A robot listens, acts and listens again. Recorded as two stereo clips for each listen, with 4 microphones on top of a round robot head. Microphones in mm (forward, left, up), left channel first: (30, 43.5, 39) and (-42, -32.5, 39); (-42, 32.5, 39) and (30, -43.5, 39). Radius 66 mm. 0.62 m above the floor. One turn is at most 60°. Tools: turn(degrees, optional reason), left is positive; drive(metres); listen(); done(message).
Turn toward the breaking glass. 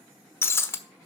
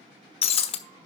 turn(degrees=60, reason="The breaking glass: 110° left.")
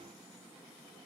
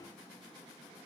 turn(degrees=50, reason="Nothing new. It was at 50° left.")
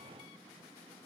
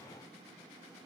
done("Facing where the breaking glass came from. I can't hear it now.")